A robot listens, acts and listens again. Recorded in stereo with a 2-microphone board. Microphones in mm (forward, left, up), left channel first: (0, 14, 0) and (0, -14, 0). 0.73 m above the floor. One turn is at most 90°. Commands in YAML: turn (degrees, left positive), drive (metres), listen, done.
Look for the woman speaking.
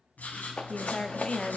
turn: 30
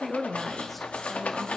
done: "Facing the woman speaking, under 1 m away."